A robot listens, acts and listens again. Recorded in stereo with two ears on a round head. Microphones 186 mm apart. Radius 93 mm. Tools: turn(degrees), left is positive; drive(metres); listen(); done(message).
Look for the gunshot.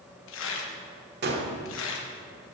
turn(degrees=-50)
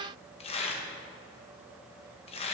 listen()
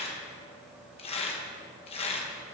done("I heard a gunshot, but can't make it out now. It was about straight ahead or 80° right.")